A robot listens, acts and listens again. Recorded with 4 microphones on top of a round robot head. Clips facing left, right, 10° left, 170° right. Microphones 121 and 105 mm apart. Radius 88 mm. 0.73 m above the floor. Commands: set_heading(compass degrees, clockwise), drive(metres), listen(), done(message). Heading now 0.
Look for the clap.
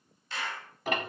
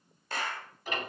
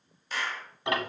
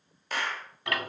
set_heading(135)
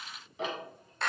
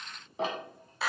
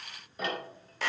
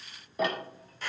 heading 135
done("Found it: a clap, straight ahead.")